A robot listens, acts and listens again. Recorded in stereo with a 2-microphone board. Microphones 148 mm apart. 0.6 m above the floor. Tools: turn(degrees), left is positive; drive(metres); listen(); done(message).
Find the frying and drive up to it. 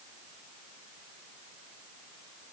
listen()
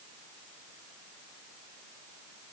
listen()
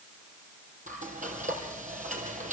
turn(degrees=-60)
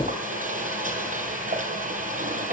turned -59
turn(degrees=-60)
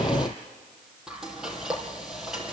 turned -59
drive(metres=1.0)
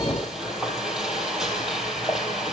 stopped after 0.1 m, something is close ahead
done("Blocked. The frying is further on, straight ahead.")